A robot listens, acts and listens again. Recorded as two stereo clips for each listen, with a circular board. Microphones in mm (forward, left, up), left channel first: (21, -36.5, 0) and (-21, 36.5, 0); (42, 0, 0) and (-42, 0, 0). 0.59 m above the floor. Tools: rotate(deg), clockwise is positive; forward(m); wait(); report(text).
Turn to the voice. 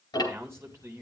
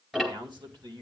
rotate(-175)
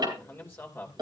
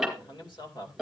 report("Facing the man speaking.")